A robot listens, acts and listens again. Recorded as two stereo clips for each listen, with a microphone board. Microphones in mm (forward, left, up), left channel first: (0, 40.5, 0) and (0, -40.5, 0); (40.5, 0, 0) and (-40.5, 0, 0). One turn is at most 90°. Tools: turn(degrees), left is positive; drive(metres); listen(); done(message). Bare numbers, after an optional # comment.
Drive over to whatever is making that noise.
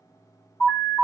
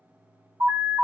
# The alarm: 145° left.
turn(90)
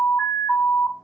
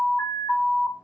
# The alarm is now 40° left.
turn(40)
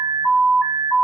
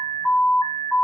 drive(1.0)
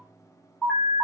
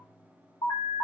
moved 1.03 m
drive(1.0)
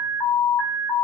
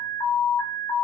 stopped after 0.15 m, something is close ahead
# The alarm is now 10° left.
turn(10)
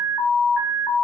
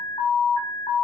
done("Arrived at the alarm, straight ahead.")